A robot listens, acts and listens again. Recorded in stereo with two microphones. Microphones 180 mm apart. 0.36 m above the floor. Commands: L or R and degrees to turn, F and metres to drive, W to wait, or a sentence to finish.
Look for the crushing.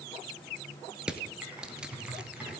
R30
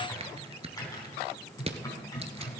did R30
R145
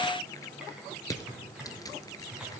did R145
L20
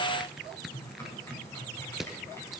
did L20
Found it: crushing, straight ahead.